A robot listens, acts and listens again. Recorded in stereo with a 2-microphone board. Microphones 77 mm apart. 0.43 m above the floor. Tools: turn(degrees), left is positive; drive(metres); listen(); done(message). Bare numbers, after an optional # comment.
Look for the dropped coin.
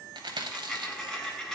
turn(30)
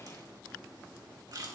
listen()
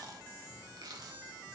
done("I heard a dropped coin, but can't make it out now. It was about 25° right or 145° left.")